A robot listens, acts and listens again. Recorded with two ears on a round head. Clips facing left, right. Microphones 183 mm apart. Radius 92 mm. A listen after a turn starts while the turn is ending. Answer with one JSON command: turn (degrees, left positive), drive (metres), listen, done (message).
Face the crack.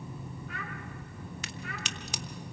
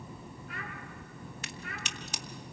{"turn": 65}
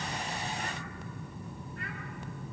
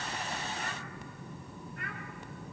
{"listen": true}
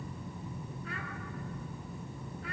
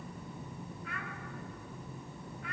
{"done": "I heard a crack, but can't make it out now. It was about straight ahead or 50° left."}